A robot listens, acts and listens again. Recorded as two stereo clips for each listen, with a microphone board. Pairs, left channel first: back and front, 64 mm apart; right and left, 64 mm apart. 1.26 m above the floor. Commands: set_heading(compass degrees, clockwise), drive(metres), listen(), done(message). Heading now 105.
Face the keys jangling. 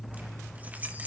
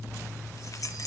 set_heading(170)
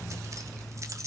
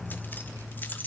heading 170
set_heading(200)
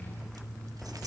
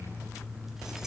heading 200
listen()
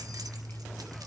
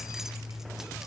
listen()
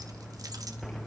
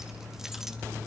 done("Facing where the keys jangling came from. I can't hear it now.")